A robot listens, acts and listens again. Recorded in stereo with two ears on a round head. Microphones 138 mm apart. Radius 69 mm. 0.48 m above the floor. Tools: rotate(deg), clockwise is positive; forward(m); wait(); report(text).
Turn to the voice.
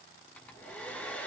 wait()
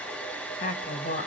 rotate(-65)
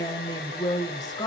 rotate(-30)
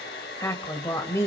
rotate(-20)
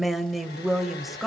report("Facing the woman speaking.")